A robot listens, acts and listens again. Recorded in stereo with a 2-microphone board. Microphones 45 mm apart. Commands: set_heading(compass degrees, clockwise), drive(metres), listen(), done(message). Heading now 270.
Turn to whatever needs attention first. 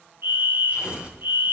set_heading(325)
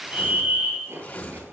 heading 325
set_heading(15)
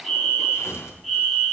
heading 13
done("Facing the fire alarm, 2 to 4 m away.")